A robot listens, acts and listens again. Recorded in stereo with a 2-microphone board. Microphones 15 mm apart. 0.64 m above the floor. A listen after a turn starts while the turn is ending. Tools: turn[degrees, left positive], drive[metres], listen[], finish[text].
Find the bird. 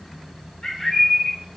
Thought: The bird: about 60° left or 120° left.
Action: turn[60]
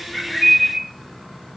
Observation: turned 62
Thought: So it is at 35° left.
Action: turn[35]
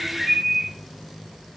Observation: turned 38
Action: finish[Facing the bird.]